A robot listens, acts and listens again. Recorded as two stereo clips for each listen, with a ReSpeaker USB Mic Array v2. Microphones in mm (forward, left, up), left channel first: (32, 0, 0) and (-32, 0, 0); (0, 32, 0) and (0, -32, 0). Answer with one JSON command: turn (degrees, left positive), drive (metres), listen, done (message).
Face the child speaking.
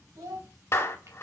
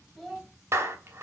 {"turn": 180}
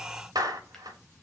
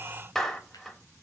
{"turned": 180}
{"listen": true}
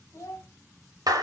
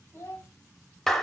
{"turn": 40}
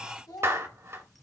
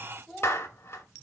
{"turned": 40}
{"done": "Found it: a child speaking, straight ahead."}